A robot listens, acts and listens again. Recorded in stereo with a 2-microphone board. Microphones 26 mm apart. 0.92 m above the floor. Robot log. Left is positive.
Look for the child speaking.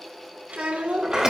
note: The child speaking: about 70° right or 110° right.
cmd yaw -70
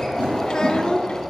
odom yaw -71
note: So it is at 45° left.
cmd yaw +45
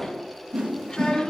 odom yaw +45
note: The child speaking is now 45° left.
cmd yaw +45
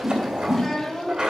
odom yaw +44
note: The child speaking is now 15° left.
cmd yaw +15
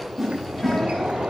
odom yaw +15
cmd idle
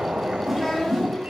end: Facing the child speaking.